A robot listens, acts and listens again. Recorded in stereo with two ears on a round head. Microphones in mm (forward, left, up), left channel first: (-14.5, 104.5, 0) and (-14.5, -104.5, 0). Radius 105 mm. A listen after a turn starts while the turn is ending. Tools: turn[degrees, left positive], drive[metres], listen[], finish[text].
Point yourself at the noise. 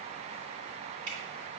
Thought: The dripping: about 20° right or 160° right.
Action: turn[-20]
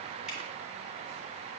Action: listen[]
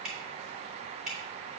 Action: finish[Found it: dripping, straight ahead.]